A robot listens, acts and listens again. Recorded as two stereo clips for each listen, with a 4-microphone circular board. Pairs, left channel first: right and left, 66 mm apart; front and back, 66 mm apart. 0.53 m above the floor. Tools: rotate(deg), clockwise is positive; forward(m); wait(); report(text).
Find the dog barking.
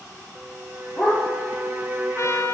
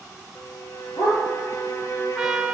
report("Facing the dog barking.")